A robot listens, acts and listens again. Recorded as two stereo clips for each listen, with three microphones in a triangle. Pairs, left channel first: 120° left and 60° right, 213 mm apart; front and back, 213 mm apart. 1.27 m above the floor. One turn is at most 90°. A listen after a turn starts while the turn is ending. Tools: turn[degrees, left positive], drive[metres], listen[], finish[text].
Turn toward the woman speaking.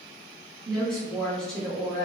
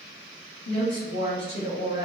Thought: The woman speaking: 30° left.
Action: turn[30]
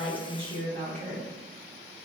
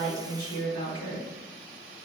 Action: finish[Found it: a woman speaking, straight ahead, 1 to 2 m away.]